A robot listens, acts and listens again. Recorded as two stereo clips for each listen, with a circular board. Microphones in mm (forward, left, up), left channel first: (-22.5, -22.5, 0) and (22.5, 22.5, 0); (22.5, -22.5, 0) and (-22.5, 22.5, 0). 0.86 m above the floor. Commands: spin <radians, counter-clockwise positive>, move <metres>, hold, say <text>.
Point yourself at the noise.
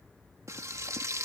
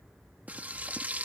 spin 1.22
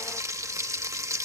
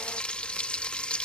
spin 0.44
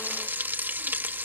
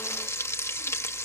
spin -0.17
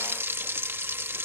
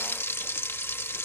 say Facing the frying.